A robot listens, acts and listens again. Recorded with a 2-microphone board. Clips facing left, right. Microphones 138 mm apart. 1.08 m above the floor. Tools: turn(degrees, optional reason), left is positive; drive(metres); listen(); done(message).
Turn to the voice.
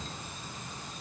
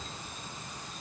listen()
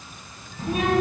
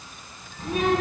turn(degrees=30)
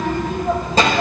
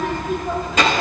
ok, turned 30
turn(degrees=145, reason="So it is at 145° left.")
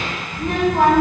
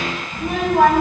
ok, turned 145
turn(degrees=-10, reason="The child speaking is now 10° right.")
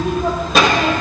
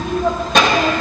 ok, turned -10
done("Found it: a child speaking, straight ahead.")